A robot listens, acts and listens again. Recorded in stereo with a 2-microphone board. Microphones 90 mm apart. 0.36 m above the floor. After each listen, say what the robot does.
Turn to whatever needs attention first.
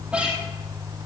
Keep listening.
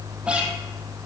Keep listening.
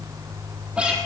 I can't make out anything urgent.